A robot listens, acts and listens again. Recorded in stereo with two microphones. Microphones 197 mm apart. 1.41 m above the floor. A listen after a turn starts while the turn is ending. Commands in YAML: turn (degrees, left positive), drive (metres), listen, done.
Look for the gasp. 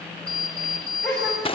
turn: 30
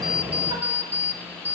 listen: true
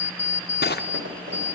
done: "I heard a gasp, but can't make it out now. It was about 25° right or 145° left."